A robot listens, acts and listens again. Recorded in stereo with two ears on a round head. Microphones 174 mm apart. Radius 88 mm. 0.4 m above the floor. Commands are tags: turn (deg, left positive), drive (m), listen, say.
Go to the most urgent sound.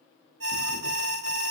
<turn deg="-65"/>
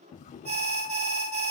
<turn deg="-35"/>
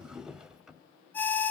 <turn deg="10"/>
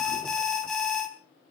<drive m="1.0"/>
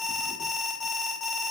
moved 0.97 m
<drive m="1.0"/>
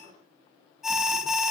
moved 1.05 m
<drive m="1.0"/>
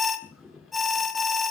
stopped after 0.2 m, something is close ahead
<say>Arrived at the alarm, straight ahead.</say>